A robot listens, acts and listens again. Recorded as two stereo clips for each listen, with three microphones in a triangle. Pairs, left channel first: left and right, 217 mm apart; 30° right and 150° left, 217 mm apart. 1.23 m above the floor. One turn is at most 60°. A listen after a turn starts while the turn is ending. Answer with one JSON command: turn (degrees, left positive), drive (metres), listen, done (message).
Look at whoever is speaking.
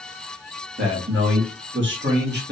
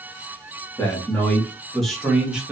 {"turn": -60}
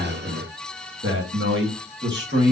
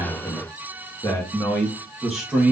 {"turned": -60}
{"turn": -60}
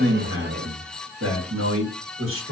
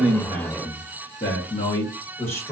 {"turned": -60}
{"turn": -60}
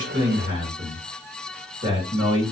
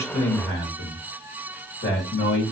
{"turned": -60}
{"turn": -50}
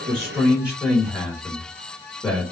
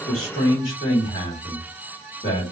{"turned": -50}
{"turn": 10}
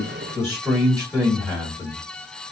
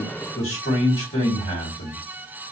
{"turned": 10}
{"done": "Facing the man speaking, 1 to 2 m away."}